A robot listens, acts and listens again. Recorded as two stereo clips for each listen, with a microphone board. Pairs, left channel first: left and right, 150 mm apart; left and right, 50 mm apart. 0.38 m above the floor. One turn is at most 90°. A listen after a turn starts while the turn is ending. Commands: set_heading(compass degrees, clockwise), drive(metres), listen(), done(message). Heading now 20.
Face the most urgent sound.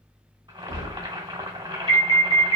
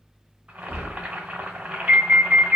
set_heading(55)
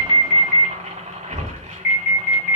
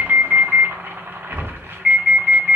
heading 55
done("Found it: an alarm, straight ahead.")